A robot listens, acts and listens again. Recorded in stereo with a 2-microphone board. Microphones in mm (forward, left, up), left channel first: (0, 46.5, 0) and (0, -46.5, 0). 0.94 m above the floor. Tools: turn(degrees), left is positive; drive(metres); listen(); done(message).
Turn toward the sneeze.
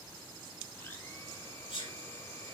turn(degrees=90)
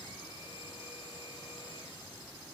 done("Facing where the sneeze came from. I can't hear it now.")